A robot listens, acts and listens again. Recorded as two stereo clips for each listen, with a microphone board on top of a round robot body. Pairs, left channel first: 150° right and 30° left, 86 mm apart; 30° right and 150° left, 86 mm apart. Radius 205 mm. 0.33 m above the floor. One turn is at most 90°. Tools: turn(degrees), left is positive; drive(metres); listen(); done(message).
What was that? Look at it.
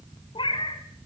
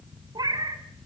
turn(degrees=-90)
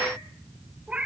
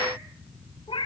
turn(degrees=-45)
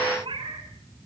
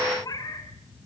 turn(degrees=15)
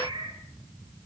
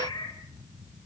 done("Found it: a cat meowing, straight ahead, 2 to 4 m away.")